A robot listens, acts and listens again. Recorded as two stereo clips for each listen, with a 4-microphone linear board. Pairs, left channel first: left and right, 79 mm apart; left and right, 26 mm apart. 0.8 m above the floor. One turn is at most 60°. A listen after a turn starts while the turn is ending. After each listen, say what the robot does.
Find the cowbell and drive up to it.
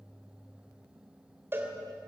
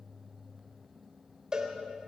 Turn 30° right.
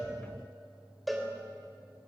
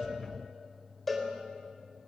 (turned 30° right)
Drive 1.0 m forward.
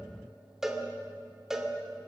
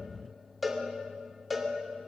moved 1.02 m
Drive 1.0 m forward.
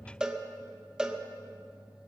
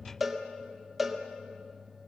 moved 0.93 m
Turn 10° right.
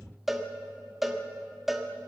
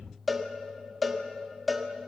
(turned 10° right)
Drive 1.0 m forward.
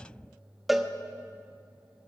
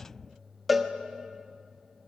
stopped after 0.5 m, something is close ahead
I am next to the cowbell.